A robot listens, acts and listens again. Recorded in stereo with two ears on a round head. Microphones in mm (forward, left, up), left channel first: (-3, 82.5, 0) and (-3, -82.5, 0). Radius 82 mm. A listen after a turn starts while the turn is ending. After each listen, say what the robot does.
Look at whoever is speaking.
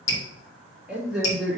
Turn 30° left.
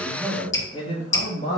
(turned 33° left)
Turn 140° left.
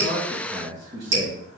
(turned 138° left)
Turn 25° right.
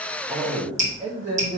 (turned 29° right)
Turn 20° right.
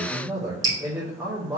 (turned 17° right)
Found it: a man speaking, straight ahead, 1 to 2 m away.